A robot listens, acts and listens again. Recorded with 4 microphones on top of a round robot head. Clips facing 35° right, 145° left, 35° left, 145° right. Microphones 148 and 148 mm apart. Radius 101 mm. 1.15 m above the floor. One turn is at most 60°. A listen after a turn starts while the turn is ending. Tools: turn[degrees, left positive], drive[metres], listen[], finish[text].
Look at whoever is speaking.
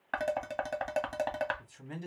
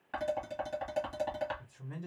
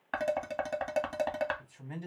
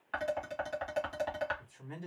Thought: The man speaking: 40° right.
Action: turn[-40]
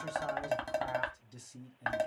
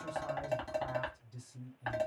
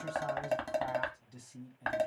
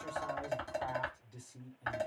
Thought: The man speaking is now 30° right.
Action: turn[-30]
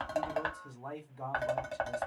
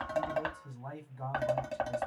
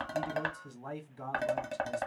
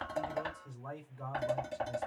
Thought: The man speaking is now 30° left.
Action: turn[30]
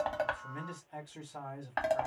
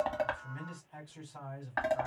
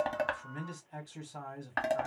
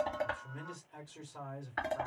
Action: finish[Found it: a man speaking, straight ahead.]